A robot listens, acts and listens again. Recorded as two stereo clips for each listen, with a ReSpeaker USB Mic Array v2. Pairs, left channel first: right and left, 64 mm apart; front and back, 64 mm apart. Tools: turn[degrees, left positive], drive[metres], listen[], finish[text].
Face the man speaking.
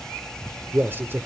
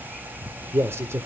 Thought: The man speaking: 140° left.
Action: turn[140]
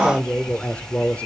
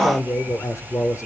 Thought: The man speaking is now 25° right.
Action: turn[-25]
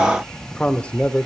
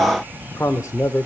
Thought: The man speaking is now 25° right.
Action: turn[-25]
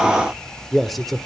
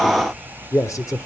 Action: finish[Found it: a man speaking, straight ahead, 1 to 2 m away.]